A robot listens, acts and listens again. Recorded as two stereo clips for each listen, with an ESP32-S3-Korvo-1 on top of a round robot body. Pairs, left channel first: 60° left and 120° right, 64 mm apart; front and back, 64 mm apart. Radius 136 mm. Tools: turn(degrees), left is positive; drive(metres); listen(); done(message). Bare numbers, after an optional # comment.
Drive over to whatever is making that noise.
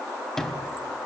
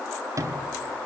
# The sliding door: 140° left.
turn(140)
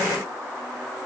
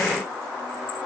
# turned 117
# Nothing new. It was at 25° left.
turn(25)
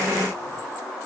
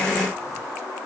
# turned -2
# Nothing new. It was at 25° left.
turn(25)
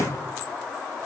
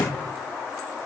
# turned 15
# The sliding door is now 15° left.
turn(15)
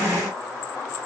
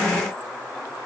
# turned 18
listen()
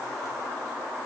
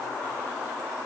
listen()
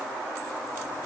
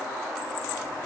done("I heard a sliding door from this way, but can't make it out now. I did not reach it.")